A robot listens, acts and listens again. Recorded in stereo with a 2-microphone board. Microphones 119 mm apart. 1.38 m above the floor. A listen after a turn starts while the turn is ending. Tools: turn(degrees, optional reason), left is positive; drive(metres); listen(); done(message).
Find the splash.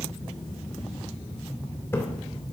turn(degrees=20, reason="The splash: about 20° left or 160° left.")
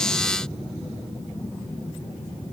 listen()
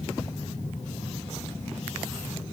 done("I heard a splash, but can't make it out now. It was about straight ahead or 140° left.")